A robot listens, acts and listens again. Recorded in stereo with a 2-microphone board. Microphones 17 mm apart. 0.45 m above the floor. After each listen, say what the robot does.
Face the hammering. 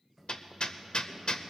Turn 65° left.
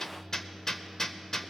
Turn 35° left.
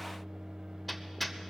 Found it: hammering, straight ahead.